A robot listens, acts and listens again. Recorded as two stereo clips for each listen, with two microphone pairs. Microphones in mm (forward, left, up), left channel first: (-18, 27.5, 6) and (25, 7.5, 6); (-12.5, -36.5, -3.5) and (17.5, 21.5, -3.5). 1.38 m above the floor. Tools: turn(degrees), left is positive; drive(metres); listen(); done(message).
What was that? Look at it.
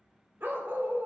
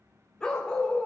turn(degrees=-45)
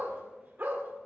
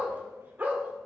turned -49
done("Facing the dog barking, 1 to 2 m away.")